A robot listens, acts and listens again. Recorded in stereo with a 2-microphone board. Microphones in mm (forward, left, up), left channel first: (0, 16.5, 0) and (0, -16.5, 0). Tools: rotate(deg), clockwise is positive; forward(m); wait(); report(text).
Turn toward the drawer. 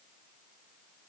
wait()
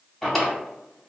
rotate(-30)
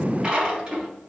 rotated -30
rotate(30)
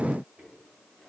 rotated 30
wait()
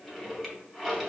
report("Facing the drawer.")